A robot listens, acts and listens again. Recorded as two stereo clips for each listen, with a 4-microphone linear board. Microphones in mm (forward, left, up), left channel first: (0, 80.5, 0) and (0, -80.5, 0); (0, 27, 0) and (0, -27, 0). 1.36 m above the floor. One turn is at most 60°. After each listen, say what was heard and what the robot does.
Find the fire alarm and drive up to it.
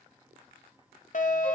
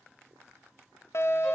The fire alarm: about 55° left or 125° left. Turn 55° left.
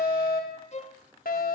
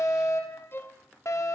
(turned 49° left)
So it is at 75° left. Turn 60° left.
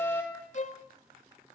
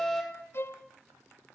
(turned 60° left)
The fire alarm is now 15° left. Turn 15° left.
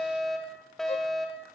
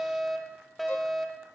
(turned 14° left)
Drive 1.0 m forward.
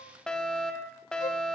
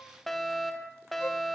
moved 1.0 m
Drive 1.0 m forward.
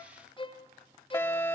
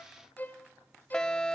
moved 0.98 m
The fire alarm is now 15° left. Turn 15° left.
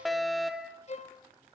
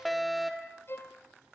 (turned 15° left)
Drive 1.0 m forward.
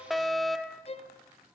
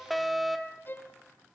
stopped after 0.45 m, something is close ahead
I am next to the fire alarm.